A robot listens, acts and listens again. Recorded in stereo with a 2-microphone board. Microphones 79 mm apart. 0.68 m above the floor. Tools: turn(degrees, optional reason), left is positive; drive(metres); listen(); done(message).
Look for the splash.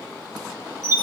listen()
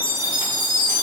listen()
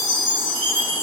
done("I can't make out a splash to turn to.")